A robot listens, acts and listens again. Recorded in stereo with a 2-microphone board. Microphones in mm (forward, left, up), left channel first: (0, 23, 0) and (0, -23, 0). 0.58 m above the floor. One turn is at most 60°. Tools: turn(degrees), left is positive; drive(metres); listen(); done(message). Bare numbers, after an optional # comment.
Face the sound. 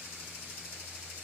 listen()
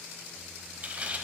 # The tearing paper: about 30° right or 150° right.
turn(-30)
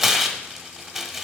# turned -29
done("Found it: tearing paper, straight ahead, under 1 m away.")